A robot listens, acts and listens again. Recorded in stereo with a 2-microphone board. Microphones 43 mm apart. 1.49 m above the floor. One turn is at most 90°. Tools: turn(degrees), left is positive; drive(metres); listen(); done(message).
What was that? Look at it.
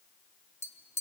turn(degrees=75)
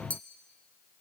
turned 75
turn(degrees=30)
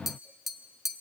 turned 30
turn(degrees=-10)
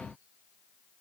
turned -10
listen()
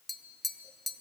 done("Facing the tapping, under 1 m away.")